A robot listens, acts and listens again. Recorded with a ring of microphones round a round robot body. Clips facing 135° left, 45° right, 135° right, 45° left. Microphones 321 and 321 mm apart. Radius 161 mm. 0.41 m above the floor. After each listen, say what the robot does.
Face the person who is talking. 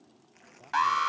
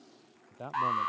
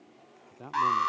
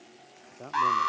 Turn 55° right.
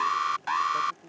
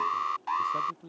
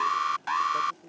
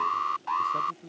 Found it: a man speaking, straight ahead.